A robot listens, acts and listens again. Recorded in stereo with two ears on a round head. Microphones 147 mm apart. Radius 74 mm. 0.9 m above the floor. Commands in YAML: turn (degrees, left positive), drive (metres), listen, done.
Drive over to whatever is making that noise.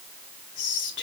turn: 75
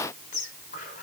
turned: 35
turn: 45
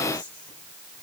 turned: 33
turn: 10
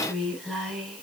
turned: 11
drive: 1.0
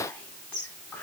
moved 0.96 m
drive: 1.0
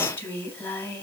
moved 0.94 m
turn: 15
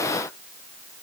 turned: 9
listen: true
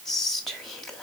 drive: 1.0
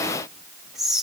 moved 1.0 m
drive: 1.0
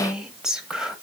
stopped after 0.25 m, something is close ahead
done: "Arrived at the whispering, straight ahead."